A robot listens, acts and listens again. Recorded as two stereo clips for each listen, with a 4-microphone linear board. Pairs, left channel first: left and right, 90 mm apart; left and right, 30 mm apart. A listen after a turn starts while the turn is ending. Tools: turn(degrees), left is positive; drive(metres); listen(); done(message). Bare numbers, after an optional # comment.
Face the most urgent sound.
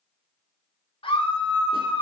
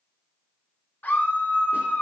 turn(90)
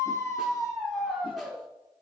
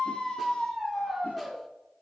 done("Facing the scream.")